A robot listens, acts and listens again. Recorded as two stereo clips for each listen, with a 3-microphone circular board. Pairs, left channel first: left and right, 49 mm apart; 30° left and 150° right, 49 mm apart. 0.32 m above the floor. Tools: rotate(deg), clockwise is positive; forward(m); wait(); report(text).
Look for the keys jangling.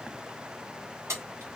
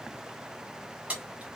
rotate(95)
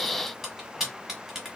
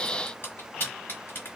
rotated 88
rotate(10)
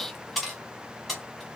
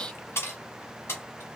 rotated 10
report("Found it: keys jangling, straight ahead.")